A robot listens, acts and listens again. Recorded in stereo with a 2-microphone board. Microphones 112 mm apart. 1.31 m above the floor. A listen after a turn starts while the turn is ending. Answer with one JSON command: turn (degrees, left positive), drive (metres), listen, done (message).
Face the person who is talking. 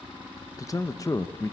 {"turn": 30}
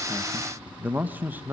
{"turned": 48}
{"turn": -15}
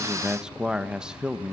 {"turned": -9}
{"done": "Facing the man speaking, 1 to 2 m away."}